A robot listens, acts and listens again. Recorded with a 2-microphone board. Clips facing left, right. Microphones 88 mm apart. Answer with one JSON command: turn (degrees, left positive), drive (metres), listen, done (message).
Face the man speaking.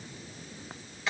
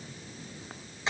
{"listen": true}
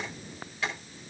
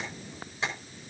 {"listen": true}
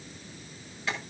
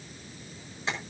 {"done": "I can't make out a man speaking to turn to."}